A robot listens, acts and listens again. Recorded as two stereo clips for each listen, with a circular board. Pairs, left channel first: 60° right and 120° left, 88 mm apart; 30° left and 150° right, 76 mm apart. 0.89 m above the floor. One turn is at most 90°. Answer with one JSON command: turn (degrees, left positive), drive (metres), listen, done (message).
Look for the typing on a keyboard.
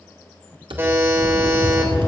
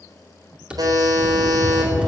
{"turn": 90}
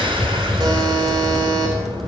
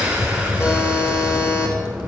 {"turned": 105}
{"turn": 30}
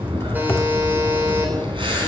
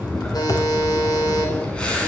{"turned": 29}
{"done": "Facing the typing on a keyboard, 1 to 2 m away."}